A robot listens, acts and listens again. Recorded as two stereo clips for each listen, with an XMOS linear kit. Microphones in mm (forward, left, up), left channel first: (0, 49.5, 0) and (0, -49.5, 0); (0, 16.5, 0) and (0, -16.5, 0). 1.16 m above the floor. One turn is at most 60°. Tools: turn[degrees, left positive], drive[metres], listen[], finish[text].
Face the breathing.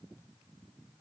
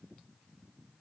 Action: listen[]
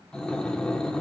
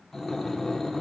Action: turn[30]
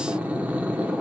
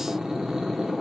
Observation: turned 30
Thought: So it is at 20° right.
Action: turn[-20]
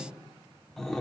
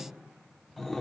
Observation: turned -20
Action: finish[Found it: breathing, straight ahead, 1 to 2 m away.]